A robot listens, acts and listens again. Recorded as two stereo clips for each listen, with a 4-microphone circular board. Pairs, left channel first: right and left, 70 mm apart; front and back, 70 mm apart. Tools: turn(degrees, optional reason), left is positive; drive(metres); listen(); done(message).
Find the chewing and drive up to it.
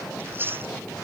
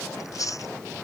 turn(degrees=35, reason="The chewing: 35° left.")
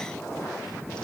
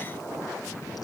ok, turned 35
listen()
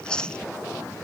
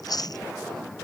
turn(degrees=-10, reason="The chewing is now 10° right.")
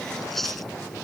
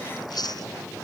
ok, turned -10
drive(metres=1.0)
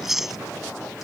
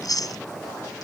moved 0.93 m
drive(metres=1.0)
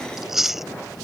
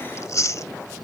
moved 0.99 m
drive(metres=1.0)
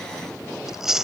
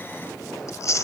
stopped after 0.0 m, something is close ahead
turn(degrees=10, reason="The chewing is now 10° left.")
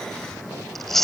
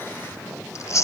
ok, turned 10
done("I am next to the chewing.")